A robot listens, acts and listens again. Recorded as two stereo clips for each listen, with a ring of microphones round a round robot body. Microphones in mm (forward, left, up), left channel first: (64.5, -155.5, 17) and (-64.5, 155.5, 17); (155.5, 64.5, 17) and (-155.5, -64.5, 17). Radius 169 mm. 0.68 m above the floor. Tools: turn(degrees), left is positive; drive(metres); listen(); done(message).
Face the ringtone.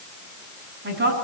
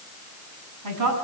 listen()
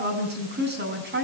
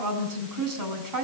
listen()
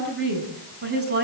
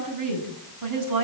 done("I can't make out a ringtone, only a woman speaking.")